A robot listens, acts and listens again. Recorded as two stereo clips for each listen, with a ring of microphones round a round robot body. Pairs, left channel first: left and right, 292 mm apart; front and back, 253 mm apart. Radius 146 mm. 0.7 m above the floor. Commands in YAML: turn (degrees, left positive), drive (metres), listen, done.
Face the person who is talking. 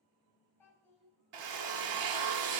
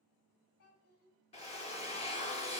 done: "Facing the child speaking."